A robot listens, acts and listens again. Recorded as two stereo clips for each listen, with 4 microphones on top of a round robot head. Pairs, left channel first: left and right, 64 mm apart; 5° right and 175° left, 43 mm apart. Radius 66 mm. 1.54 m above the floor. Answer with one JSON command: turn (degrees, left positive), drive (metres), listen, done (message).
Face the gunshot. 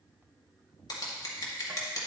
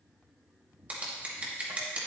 {"listen": true}
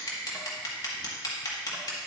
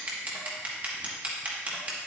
{"listen": true}
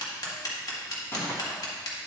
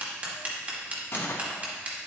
{"turn": 25}
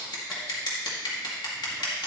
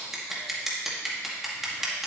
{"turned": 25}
{"done": "I heard a gunshot from this way, but can't make it out now."}